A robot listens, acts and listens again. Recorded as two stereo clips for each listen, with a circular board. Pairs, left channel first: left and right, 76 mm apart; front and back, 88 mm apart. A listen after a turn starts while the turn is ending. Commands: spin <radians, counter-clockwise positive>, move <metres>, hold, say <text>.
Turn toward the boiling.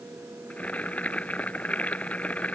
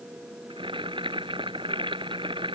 spin 2.88
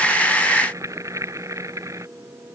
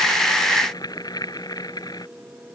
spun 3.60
spin -0.70
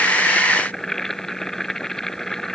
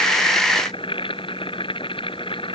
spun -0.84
say Facing the boiling.